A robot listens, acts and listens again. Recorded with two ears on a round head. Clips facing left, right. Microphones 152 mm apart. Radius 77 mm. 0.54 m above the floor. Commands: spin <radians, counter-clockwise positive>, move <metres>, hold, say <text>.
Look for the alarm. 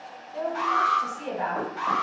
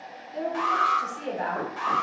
spin -1.05
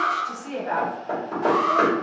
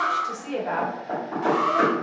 spin -0.26
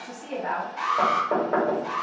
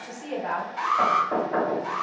say Facing the alarm, 1 to 2 m away.